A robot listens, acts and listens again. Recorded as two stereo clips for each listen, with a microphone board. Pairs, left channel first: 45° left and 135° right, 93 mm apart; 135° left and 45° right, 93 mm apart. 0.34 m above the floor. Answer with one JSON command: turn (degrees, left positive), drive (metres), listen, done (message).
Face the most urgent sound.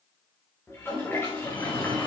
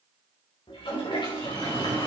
{"turn": 60}
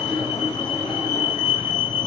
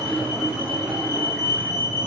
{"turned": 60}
{"done": "Found it: a fire alarm, straight ahead."}